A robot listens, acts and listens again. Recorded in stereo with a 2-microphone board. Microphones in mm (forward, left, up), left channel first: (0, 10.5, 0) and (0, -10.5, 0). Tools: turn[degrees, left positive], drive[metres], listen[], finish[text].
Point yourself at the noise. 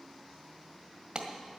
Thought: The clap: about 50° right or 130° right.
Action: turn[-50]
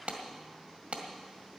Thought: So it is at 80° right.
Action: turn[-80]
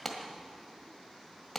Thought: The clap is now 10° left.
Action: turn[10]
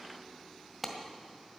Action: finish[Found it: a clap, straight ahead.]